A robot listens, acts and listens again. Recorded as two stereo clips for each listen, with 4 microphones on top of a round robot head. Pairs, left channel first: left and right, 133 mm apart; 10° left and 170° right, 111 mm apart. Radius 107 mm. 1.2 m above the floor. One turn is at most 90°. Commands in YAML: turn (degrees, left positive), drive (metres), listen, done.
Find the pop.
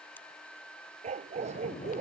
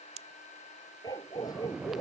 turn: 90
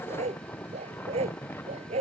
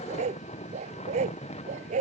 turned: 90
turn: 80
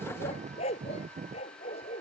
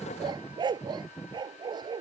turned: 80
done: "Facing where the pop came from. I can't hear it now."